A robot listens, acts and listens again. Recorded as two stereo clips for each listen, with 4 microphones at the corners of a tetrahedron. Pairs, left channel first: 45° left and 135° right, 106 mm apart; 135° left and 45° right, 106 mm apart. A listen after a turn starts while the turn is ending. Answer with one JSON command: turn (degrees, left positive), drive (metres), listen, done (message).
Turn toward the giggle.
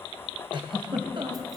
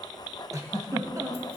{"turn": -100}
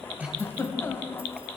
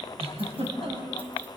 {"turn": -25}
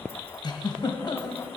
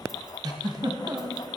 {"done": "Facing the giggle, 2 to 4 m away."}